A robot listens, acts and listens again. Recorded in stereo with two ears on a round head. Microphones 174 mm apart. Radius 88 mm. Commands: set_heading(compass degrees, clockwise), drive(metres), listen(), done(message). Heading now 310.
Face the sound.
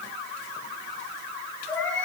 set_heading(280)
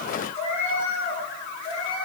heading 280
set_heading(135)
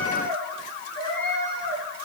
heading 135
set_heading(105)
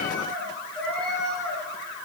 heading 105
done("Facing the cat meowing, over 4 m away.")